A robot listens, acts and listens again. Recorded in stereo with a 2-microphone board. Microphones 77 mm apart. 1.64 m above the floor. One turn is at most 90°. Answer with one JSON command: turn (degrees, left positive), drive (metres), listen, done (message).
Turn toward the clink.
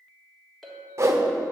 {"turn": 30}
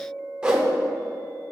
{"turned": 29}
{"turn": -20}
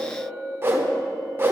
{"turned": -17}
{"done": "Facing the clink, 1 to 2 m away."}